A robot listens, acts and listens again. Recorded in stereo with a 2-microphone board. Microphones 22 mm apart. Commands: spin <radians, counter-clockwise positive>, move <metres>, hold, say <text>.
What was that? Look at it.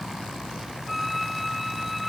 spin -0.52
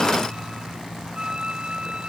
spin -2.53
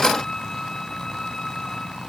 spin 0.44
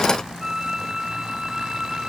spin -0.44
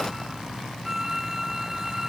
spin -0.26
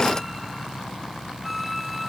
say Found it: a violin, straight ahead.